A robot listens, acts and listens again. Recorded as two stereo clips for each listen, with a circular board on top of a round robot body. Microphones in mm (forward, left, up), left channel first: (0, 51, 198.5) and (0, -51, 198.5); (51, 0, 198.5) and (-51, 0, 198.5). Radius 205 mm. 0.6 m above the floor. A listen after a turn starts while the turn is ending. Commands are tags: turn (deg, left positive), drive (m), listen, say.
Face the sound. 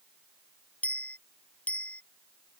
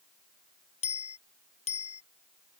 <turn deg="10"/>
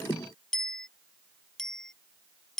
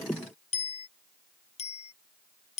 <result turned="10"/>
<say>Facing the bicycle bell.</say>